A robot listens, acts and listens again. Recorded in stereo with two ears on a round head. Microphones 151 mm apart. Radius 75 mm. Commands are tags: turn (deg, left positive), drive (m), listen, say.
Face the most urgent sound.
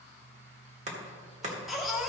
<turn deg="30"/>
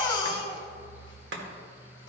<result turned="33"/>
<turn deg="150"/>
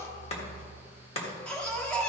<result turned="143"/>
<say>Facing the baby crying.</say>